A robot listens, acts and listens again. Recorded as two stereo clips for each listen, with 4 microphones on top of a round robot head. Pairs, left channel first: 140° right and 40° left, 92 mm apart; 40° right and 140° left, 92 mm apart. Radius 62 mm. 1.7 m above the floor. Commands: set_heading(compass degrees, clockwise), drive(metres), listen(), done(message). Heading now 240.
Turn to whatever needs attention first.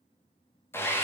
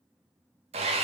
listen()
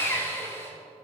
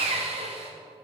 listen()
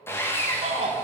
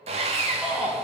set_heading(180)
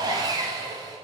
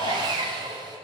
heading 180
done("Facing the shout, 2 to 4 m away.")